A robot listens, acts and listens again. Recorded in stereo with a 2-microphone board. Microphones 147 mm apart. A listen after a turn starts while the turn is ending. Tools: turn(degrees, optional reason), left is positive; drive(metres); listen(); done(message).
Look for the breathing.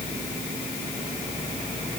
listen()
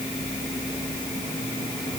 listen()
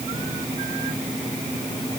done("I can't make out breathing.")